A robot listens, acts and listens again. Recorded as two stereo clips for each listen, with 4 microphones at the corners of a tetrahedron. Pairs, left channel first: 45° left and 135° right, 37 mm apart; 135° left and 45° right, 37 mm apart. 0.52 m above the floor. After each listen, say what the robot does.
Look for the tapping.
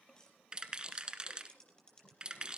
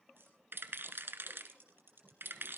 Turn 20° right.
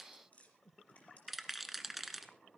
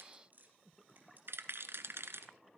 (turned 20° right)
Found it: tapping, straight ahead.